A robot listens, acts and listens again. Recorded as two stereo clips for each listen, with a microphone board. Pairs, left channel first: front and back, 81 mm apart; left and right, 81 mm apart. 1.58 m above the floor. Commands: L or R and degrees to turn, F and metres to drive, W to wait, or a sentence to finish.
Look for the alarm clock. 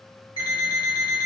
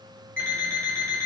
L20
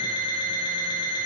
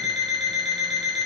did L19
Facing the alarm clock.